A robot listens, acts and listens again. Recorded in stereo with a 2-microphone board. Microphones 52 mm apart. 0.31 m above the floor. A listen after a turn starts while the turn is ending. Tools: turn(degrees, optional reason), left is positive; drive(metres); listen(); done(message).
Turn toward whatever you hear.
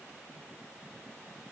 listen()
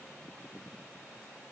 listen()
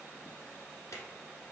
turn(degrees=75, reason="The drawer: about 75° left or 105° left.")
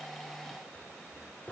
turn(degrees=35, reason="So it is at 35° left.")
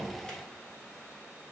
listen()
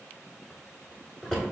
turn(degrees=15, reason="The drawer is now 15° left.")
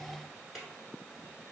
done("Facing the drawer, 1 to 2 m away.")